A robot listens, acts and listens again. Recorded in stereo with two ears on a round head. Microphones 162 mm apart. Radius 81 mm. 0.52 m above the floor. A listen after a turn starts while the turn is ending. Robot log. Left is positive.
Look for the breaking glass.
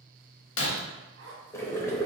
note: The breaking glass: about 70° left or 110° left.
cmd yaw +70
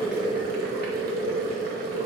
cmd idle
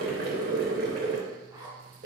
end: I heard breaking glass, but can't make it out now. It was about straight ahead or 40° left.